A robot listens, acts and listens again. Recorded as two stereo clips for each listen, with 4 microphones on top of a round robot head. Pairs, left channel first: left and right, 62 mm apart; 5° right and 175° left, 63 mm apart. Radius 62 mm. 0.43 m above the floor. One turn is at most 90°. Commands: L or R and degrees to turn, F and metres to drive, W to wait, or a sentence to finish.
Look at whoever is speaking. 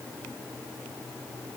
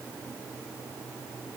W
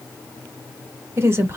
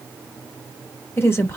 R50
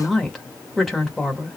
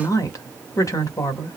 Found it: a woman speaking, straight ahead.